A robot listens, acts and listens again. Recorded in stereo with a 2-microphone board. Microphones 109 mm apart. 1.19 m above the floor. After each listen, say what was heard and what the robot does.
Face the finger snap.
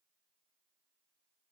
Keep listening.
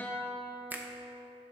The finger snap: about 15° right or 165° right. Turn 15° right.
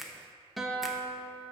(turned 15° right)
Facing the finger snap.